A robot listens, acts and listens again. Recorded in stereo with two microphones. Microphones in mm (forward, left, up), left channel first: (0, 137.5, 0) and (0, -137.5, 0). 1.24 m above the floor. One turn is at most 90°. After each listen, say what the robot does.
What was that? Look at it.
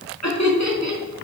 Turn 90° left.
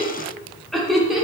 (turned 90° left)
Found it: laughter, straight ahead, 2 to 4 m away.